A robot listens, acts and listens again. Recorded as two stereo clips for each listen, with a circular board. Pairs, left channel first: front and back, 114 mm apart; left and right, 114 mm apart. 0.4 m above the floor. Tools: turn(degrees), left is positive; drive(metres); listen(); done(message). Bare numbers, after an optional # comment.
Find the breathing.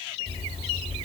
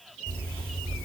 # The breathing: 25° right.
turn(-25)
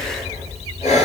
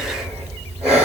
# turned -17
# The breathing is now 10° right.
turn(-10)
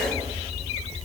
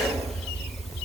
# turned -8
done("Found it: breathing, straight ahead.")